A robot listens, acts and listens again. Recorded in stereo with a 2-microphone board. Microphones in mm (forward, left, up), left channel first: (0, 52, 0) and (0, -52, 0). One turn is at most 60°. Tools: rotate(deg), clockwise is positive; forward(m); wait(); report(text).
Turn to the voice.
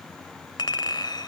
wait()
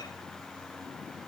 wait()
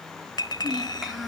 rotate(-30)
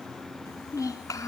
rotate(-60)
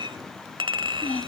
rotate(-60)
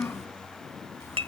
rotate(-25)
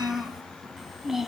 report("Found it: a child speaking, straight ahead, 1 to 2 m away.")